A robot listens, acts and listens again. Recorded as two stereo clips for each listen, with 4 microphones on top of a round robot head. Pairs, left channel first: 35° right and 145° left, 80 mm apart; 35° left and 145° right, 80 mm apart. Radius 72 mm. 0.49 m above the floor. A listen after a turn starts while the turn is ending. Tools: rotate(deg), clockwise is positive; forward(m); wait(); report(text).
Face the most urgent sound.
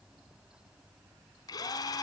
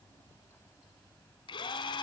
wait()
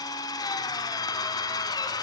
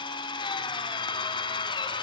wait()
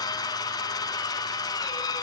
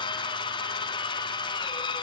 report("I can't make out anything urgent to turn to.")